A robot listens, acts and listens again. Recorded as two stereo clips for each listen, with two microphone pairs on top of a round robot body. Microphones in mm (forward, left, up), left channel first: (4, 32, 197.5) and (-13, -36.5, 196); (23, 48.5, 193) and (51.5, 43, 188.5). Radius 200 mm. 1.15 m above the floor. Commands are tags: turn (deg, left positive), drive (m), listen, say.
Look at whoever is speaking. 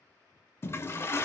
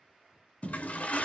<listen/>
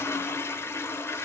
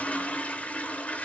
<listen/>
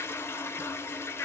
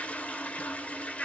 <say>I can't make out anyone speaking to turn to.</say>